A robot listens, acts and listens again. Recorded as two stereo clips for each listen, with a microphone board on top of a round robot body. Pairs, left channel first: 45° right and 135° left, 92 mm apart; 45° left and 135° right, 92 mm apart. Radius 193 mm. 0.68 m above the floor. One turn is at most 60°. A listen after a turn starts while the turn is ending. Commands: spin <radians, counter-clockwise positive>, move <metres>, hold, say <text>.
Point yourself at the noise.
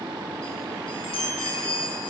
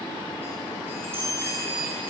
spin -1.05
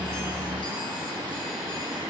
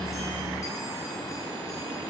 hold
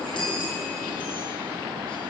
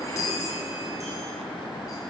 spin -0.17
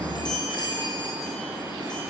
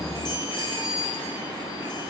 say Found it: a chime, straight ahead.